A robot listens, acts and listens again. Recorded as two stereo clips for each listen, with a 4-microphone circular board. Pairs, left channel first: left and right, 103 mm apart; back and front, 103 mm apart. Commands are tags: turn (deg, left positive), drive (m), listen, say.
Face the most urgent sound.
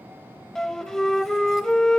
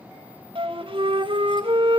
<listen/>
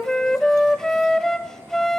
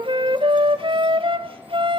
<listen/>
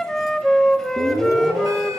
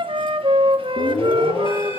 <turn deg="-145"/>
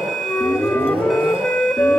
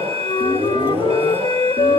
<say>Found it: an alarm, straight ahead.</say>